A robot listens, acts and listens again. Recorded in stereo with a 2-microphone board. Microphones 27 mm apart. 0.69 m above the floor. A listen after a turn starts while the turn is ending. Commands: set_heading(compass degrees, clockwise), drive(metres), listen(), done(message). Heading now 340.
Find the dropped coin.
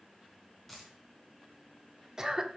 set_heading(310)
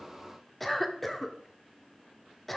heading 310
listen()
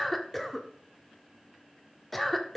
done("I heard a dropped coin, but can't make it out now. It was about 20° right or 140° left.")